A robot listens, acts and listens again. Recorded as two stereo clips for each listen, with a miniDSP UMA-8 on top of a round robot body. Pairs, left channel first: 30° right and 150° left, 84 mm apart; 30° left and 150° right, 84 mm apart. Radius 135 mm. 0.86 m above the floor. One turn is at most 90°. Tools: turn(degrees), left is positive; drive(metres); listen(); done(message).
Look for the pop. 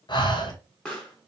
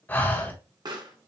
turn(degrees=-90)
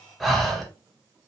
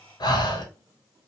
turn(degrees=-20)
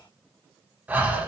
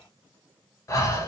done("Facing where the pop came from. I can't hear it now.")